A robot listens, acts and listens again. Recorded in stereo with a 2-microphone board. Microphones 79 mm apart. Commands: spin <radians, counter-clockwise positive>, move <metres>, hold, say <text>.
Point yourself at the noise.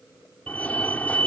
spin 0.26
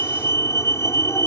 spin 2.53
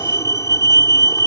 spin 0.79
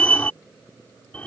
spin 0.26
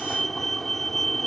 say Facing the fire alarm.